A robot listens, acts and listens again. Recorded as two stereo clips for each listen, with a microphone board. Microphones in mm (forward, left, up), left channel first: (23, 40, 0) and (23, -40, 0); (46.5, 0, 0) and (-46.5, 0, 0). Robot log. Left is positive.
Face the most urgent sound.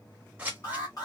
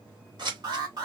note: The alarm: 135° left.
cmd yaw +135
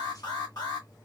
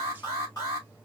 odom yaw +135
note: The alarm is now 50° left.
cmd yaw +50
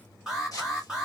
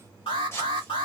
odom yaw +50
note: The alarm is now 10° right.
cmd yaw -10
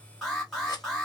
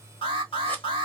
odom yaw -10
end: Found it: an alarm, straight ahead, 1 to 2 m away.